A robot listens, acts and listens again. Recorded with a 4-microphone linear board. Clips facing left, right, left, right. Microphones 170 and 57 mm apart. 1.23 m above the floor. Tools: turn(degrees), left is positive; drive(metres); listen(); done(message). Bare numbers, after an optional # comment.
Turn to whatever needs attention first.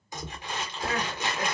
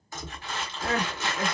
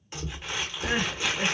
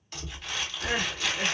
# The crying: about 35° right or 145° right.
turn(-35)
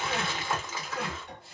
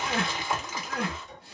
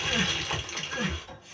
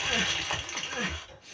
# So it is at 110° right.
turn(-110)
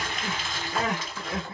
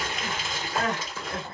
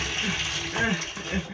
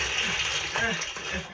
done("Found it: crying, straight ahead, 1 to 2 m away.")